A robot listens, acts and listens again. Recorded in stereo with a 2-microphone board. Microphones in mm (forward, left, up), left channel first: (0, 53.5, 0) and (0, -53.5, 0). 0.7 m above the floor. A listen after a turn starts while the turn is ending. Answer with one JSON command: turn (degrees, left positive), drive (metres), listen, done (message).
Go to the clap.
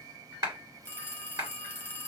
{"turn": -35}
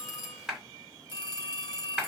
{"drive": 1.0}
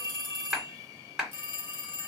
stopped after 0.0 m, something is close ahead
{"done": "Blocked. The clap is further on, straight ahead."}